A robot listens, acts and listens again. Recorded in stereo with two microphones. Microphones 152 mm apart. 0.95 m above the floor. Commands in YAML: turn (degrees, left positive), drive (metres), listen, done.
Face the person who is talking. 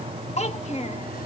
turn: 45
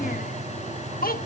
turn: 90
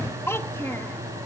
turn: 15
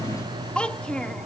done: "Found it: a child speaking, straight ahead."